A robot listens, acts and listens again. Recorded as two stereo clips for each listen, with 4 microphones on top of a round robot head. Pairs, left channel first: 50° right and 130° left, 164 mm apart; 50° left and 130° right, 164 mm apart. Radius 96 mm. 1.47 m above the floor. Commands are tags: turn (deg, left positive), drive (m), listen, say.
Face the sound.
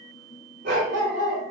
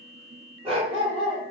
<turn deg="175"/>
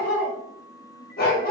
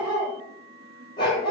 <turn deg="-10"/>
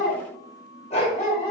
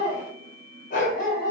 <turn deg="10"/>
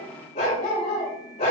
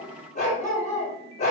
<say>Found it: a dog barking, straight ahead, 2 to 4 m away.</say>